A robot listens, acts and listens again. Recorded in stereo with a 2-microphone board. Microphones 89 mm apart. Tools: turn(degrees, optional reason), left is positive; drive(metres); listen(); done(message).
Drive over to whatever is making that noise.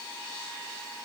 listen()
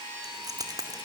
turn(degrees=-45, reason="The keys jangling: about 45° right or 135° right.")
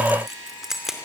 drive(metres=1.0)
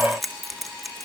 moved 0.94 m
drive(metres=1.0)
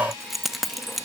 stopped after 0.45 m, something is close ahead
done("Arrived at the keys jangling, straight ahead.")